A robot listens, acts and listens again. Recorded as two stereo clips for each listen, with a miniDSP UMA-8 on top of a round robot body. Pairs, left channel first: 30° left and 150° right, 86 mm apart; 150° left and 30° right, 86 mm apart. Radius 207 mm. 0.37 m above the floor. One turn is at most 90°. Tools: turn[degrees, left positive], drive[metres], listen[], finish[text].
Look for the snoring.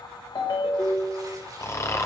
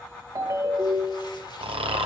Thought: The snoring: 25° right.
Action: turn[-25]
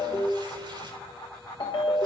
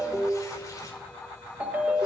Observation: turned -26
Action: listen[]
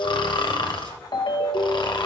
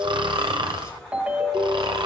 Action: finish[Found it: snoring, straight ahead, 1 to 2 m away.]